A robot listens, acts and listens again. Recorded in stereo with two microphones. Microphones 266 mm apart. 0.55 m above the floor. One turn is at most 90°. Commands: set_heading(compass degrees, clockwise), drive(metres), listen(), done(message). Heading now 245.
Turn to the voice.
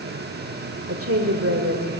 set_heading(310)
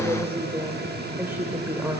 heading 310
set_heading(320)
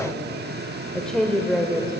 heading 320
done("Found it: a woman speaking, straight ahead.")